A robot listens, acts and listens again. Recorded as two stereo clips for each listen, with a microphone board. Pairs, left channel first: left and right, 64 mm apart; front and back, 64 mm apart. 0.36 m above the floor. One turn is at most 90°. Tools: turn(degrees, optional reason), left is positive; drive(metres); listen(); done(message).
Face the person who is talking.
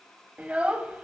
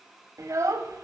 turn(degrees=-90, reason="The child speaking: 160° right.")
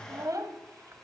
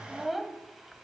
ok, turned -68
turn(degrees=-90, reason="The child speaking is now 90° right.")
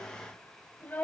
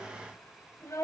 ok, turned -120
turn(degrees=30, reason="The child speaking is now 30° left.")
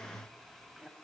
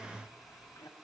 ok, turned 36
turn(degrees=-10, reason="Nothing new. It was at 10° right.")
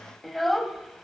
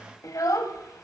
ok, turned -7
done("Facing the child speaking, 1 to 2 m away.")